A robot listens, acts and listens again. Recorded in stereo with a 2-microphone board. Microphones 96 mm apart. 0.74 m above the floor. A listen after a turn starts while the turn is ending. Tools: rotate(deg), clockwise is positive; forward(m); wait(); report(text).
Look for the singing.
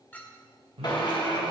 rotate(90)
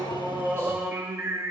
rotate(30)
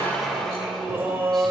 rotate(30)
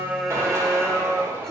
report("Facing the singing, 1 to 2 m away.")